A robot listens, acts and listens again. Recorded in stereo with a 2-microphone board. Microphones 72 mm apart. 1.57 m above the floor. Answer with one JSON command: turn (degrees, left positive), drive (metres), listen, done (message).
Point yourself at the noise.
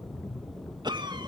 {"turn": -90}
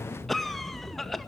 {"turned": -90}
{"done": "Facing the cough."}